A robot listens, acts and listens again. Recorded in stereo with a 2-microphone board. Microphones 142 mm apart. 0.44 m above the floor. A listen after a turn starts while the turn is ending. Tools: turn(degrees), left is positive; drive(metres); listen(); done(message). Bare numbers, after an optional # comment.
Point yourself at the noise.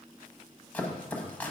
turn(30)
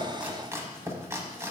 # So it is at 20° right.
turn(-20)
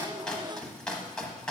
done("Facing the chopping.")